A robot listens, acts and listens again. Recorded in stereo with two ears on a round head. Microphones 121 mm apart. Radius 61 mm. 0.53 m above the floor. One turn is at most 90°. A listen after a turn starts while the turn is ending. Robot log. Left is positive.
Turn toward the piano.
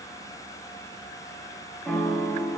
cmd yaw +30
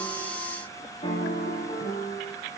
note: So it is at 140° left.
cmd yaw +90
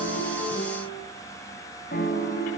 note: The piano is now 60° left.
cmd yaw +60
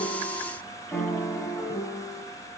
note: The piano is now 10° left.
cmd yaw +10
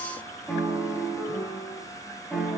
end: Found it: a piano, straight ahead.